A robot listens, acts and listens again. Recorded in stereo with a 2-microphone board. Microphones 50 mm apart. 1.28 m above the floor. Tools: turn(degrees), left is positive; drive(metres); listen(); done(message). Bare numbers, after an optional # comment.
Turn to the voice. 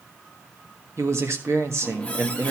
# The man speaking: about 65° right or 115° right.
turn(-65)
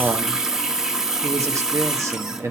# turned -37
# So it is at 75° right.
turn(-75)
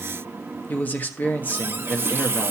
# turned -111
# The man speaking is now 35° left.
turn(35)
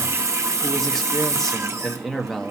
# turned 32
done("Facing the man speaking.")